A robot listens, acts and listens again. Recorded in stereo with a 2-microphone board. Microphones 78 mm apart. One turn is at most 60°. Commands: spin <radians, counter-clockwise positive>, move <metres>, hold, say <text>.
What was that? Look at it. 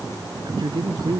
spin -1.05
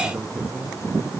spin -0.17
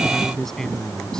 say Found it: a man speaking, straight ahead.